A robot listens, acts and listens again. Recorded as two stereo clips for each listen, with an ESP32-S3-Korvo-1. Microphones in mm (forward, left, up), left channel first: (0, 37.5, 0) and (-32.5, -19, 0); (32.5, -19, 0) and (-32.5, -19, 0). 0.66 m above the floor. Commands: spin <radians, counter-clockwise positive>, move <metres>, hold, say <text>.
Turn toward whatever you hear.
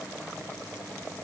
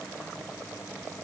hold
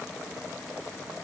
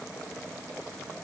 hold
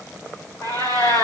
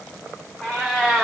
spin 1.22
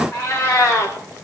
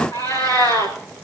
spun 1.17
say Facing the cat meowing, over 4 m away.